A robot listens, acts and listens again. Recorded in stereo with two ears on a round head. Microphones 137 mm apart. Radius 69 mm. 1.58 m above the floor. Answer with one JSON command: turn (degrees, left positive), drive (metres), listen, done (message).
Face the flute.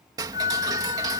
{"turn": 50}
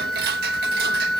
{"done": "Found it: a flute, straight ahead."}